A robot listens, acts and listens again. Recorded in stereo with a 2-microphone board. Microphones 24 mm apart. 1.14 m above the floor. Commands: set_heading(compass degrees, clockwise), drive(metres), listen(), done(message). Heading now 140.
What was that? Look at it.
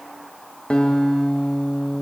set_heading(90)
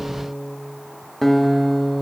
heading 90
set_heading(80)
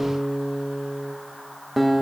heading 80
done("Found it: a guitar, straight ahead.")